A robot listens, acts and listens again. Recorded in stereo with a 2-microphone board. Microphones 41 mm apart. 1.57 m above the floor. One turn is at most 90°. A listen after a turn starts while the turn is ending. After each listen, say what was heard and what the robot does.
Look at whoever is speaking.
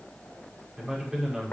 Turn 30° right.
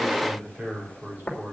So it is at 135° right. Turn 90° right.
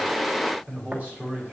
The man speaking is now 40° right. Turn 40° right.
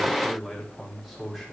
Found it: a man speaking, straight ahead, over 4 m away.